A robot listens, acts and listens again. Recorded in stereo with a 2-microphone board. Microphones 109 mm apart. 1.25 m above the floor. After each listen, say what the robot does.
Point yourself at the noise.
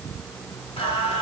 Turn 55° left.
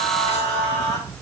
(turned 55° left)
Turn 85° left.
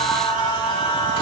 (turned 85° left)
Turn 45° left.
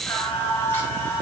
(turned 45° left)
Turn 20° left.
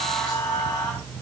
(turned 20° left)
Found it: singing, straight ahead, 2 to 4 m away.